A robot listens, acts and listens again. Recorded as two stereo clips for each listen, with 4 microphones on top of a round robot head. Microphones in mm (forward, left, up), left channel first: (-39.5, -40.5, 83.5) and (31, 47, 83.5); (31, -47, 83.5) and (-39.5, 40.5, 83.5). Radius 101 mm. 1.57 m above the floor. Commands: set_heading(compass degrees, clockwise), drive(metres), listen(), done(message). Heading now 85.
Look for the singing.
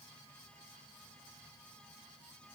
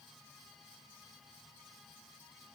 listen()
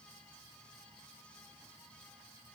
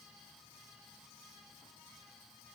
listen()
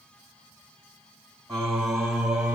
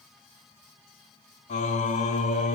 set_heading(120)
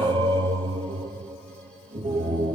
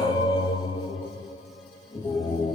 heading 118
done("Found it: singing, straight ahead, 2 to 4 m away.")